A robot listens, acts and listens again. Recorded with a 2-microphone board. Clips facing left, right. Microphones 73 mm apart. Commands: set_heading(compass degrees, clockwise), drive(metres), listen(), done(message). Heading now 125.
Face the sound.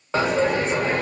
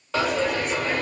set_heading(100)
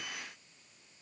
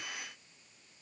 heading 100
listen()
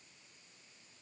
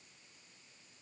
done("I heard a dropped coin, but can't make it out now. It was about straight ahead or 130° left.")